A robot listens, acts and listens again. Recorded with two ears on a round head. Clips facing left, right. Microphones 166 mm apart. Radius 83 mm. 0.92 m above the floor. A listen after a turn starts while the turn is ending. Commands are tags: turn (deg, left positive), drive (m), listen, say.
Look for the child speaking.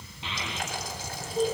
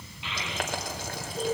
<turn deg="30"/>
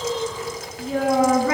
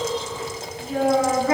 <turn deg="120"/>
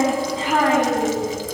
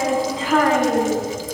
<turn deg="15"/>
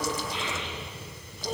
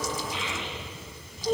<say>Found it: a child speaking, straight ahead.</say>